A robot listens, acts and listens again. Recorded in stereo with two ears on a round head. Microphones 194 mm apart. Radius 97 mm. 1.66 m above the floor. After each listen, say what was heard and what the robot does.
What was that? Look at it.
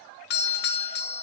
The doorbell: about 50° left or 130° left. Turn 50° left.
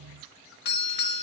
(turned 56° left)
So it is at 60° left. Turn 60° left.
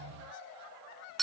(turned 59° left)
Facing the doorbell.